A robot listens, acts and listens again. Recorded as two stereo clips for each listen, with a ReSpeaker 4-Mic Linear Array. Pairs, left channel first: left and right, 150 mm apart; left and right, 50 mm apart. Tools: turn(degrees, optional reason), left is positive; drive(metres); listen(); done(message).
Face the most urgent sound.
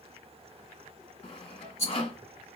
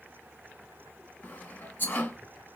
listen()
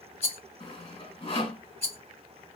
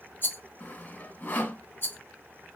listen()
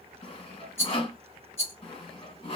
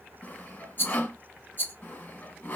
done("I can't make out anything urgent to turn to.")